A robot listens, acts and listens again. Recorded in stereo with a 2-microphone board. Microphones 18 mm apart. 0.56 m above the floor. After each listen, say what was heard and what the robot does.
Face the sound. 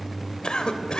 The cough: about 45° left or 135° left. Turn 45° left.
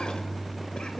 So it is at 85° left. Turn 85° left.
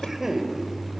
The cough is now 15° right. Turn 15° right.
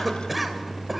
Facing the cough, 2 to 4 m away.